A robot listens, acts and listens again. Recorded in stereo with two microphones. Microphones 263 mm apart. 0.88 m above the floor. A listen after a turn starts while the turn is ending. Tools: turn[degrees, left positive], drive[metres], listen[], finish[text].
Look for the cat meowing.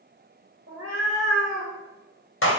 Thought: The cat meowing: about 55° right or 125° right.
Action: turn[-55]
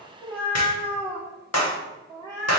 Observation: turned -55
Thought: So it is at 15° left.
Action: turn[15]
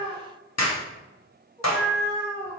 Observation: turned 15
Thought: The cat meowing is now 15° left.
Action: turn[15]
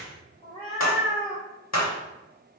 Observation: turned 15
Action: finish[Facing the cat meowing.]